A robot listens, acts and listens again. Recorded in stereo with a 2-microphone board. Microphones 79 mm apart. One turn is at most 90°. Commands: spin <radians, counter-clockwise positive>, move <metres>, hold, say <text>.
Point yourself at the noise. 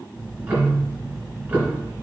spin -0.35
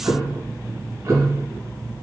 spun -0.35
spin -1.57
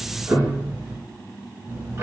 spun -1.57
spin -0.61
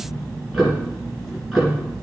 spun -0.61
say Facing the ticking, 2 to 4 m away.